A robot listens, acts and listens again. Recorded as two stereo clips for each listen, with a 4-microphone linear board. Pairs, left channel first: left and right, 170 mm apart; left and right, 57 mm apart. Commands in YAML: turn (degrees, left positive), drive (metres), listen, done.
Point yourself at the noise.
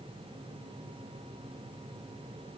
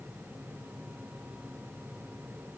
listen: true
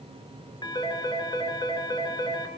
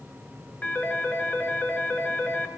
turn: 25
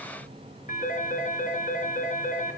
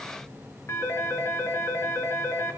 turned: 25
turn: 130
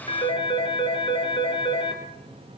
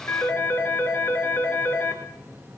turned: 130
turn: 30
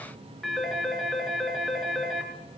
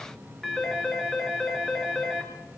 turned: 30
done: "Found it: a phone ringing, straight ahead, over 4 m away."